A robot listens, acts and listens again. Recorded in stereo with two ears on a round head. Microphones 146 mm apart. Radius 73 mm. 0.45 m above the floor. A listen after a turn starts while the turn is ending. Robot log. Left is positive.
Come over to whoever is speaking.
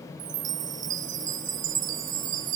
cmd idle
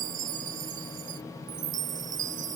cmd idle
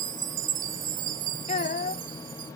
note: The child speaking: about 45° left or 135° left.
cmd yaw +45
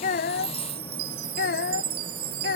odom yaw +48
note: So it is at 85° left.
cmd yaw +85
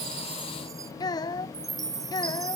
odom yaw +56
note: The child speaking is now 25° left.
cmd yaw +25
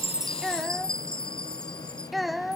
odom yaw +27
cmd fwd 1.0
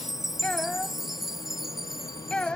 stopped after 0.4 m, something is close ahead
end: Something is in my way. I am facing the child speaking but have not reached it.